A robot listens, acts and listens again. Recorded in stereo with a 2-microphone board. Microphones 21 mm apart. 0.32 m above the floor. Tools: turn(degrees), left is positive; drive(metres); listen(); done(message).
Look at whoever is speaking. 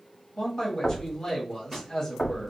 turn(degrees=25)
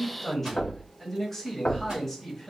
done("Found it: a man speaking, straight ahead.")